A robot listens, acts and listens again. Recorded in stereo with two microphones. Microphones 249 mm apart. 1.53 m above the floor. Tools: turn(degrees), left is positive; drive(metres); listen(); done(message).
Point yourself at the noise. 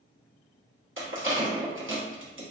turn(degrees=-55)
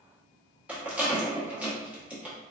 done("Found it: a rattle, straight ahead.")